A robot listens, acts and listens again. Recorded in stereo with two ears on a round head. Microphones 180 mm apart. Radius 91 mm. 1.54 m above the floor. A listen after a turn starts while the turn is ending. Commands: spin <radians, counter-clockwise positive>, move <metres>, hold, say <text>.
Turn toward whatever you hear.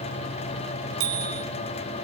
spin -1.22
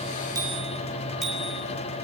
say Facing the bicycle bell, over 4 m away.